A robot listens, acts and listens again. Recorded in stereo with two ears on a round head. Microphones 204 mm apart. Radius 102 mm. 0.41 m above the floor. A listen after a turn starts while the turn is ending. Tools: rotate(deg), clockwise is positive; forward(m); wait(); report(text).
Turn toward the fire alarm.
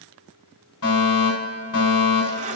rotate(-70)
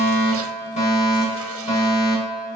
rotate(-30)
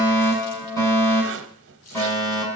rotate(-15)
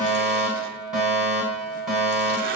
report("Facing the fire alarm, over 4 m away.")